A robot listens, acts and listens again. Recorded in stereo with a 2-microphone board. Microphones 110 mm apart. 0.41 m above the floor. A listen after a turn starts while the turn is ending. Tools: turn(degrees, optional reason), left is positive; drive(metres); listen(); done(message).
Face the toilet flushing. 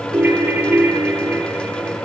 listen()
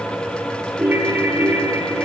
listen()
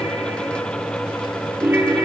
done("I can't make out a toilet flushing, only a ringtone.")